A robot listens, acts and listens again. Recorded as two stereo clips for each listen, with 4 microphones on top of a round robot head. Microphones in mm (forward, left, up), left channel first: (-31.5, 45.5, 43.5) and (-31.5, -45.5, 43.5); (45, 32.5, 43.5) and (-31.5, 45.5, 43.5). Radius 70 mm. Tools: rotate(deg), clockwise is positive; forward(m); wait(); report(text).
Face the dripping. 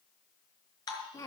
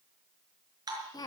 rotate(-135)
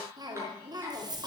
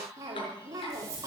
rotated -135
wait()
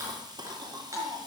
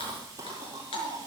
rotate(20)
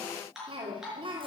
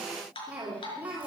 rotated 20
report("Facing the dripping, over 4 m away.")